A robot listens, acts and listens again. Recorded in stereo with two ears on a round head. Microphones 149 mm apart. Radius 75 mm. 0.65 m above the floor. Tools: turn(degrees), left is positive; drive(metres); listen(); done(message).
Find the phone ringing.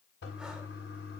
listen()
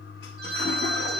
turn(degrees=-65)
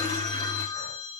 done("Facing the phone ringing.")